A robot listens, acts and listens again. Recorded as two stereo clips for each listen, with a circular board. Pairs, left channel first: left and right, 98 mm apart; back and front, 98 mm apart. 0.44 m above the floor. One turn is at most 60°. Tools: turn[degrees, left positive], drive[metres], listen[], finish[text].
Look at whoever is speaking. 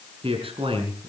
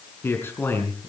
Thought: The man speaking: 115° right.
Action: turn[-60]
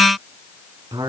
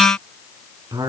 Thought: The man speaking is now 50° right.
Action: turn[-50]
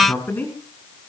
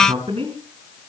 Thought: The man speaking is now 15° left.
Action: turn[15]
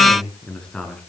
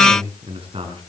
Action: finish[Found it: a man speaking, straight ahead.]